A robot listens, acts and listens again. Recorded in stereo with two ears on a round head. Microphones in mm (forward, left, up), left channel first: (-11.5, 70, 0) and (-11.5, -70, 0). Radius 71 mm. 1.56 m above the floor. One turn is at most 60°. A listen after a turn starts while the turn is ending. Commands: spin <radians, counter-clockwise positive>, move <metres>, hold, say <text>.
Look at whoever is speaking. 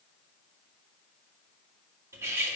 hold
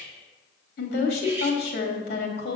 spin 1.05
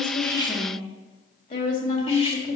spin 0.87
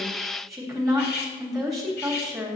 say Facing the woman speaking.